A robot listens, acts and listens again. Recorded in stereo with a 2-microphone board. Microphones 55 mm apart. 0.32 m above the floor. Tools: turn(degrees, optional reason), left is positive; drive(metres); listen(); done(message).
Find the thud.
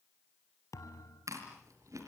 turn(degrees=75, reason="The thud: about 75° left or 105° left.")
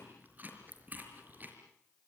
listen()
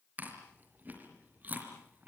done("I heard a thud, but can't make it out now. It was about straight ahead or 30° left.")